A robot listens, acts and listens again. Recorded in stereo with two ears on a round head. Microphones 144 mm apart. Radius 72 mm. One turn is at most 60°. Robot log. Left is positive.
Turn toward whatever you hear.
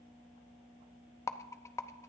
note: The rattle: about 20° left or 160° left.
cmd yaw +20
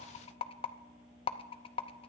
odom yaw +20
note: So it is at 140° left.
cmd yaw +60
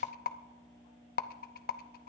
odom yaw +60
note: The rattle is now 75° left.
cmd yaw +60
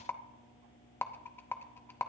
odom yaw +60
note: The rattle is now 15° left.
cmd yaw +15
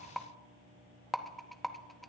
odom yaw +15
end: Found it: a rattle, straight ahead.